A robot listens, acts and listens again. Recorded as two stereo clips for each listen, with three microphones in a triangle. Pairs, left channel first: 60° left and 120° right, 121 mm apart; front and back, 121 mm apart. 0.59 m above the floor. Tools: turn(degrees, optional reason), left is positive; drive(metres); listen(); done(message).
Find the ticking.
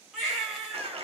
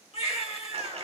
listen()
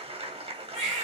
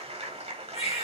listen()
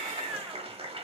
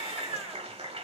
done("I can't make out ticking to turn to.")